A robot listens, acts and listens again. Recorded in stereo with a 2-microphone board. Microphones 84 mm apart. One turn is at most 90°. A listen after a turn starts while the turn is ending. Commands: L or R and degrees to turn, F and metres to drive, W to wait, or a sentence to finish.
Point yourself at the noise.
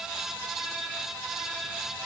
W
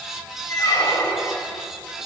L45
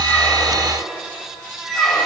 Facing the squeak.